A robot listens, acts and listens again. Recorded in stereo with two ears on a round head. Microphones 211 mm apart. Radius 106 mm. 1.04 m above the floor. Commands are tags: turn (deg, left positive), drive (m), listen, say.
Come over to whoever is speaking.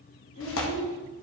<turn deg="70"/>
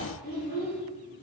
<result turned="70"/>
<turn deg="40"/>
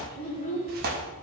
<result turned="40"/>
<turn deg="10"/>
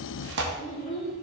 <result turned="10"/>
<drive m="1.0"/>
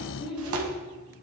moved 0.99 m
<drive m="1.0"/>
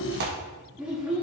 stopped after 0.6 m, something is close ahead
<say>Arrived at the child speaking, straight ahead.</say>